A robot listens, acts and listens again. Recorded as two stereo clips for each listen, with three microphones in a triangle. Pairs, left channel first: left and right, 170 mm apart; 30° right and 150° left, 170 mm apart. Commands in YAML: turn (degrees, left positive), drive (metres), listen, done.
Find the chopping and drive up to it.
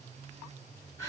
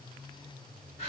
listen: true
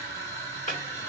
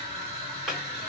turn: 60
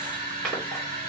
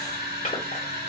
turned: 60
listen: true
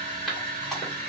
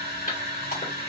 drive: 1.0
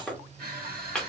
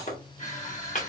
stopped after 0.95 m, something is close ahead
done: "I am next to the chopping."